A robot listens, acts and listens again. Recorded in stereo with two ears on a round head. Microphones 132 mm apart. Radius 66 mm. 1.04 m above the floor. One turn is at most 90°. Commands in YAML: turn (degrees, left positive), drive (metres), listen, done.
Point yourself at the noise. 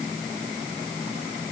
listen: true
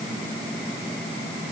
listen: true
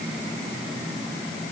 done: "I can't make out anything to turn to."